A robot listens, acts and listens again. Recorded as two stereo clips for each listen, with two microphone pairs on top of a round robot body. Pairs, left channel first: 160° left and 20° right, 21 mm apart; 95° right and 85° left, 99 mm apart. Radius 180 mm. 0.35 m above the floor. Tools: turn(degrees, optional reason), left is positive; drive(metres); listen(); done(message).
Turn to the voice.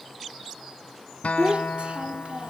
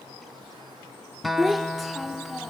done("Facing the child speaking, 1 to 2 m away.")